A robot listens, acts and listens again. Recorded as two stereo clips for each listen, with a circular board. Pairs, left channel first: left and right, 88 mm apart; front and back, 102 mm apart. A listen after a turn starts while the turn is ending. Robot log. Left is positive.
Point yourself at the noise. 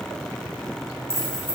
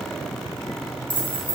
note: The keys jangling: 25° left.
cmd yaw +25
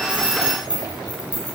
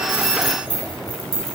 note: The keys jangling is now 15° right.
cmd yaw -15
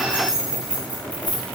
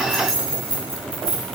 note: The keys jangling is now 20° right.
cmd yaw -20
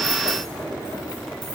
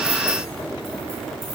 cmd idle
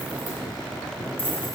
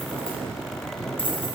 cmd idle
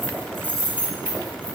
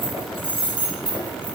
note: The keys jangling is now 25° right.
cmd yaw -25
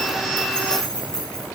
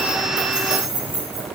note: The keys jangling is now 10° left.
cmd yaw +10
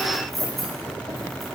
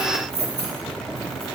end: Facing the keys jangling.